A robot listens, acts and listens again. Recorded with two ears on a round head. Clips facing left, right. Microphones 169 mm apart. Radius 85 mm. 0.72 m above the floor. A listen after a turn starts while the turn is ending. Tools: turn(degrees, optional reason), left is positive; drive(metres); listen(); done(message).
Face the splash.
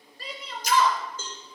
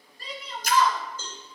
turn(degrees=-50, reason="The splash: about 50° right or 130° right.")
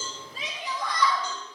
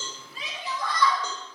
listen()
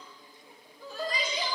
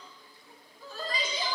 done("I heard a splash, but can't make it out now. It was about straight ahead or 80° right.")